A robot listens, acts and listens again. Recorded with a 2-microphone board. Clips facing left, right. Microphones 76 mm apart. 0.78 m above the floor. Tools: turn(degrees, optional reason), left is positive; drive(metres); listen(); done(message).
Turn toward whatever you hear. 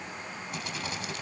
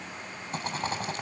turn(degrees=-40, reason="The rattle: about 40° right or 140° right.")
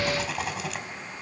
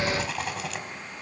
done("Found it: a rattle, straight ahead, 2 to 4 m away.")